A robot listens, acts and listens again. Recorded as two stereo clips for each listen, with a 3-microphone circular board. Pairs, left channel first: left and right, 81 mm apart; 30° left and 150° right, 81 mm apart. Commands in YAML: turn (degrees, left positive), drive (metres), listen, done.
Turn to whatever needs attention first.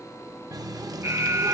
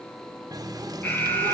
turn: -40
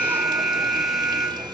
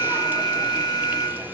done: "Found it: an alarm, straight ahead."